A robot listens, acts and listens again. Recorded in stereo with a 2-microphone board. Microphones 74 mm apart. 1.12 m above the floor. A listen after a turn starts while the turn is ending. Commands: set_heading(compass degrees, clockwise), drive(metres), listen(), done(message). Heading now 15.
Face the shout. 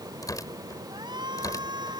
set_heading(105)
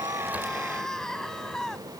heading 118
set_heading(108)
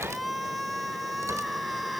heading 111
done("Facing the shout.")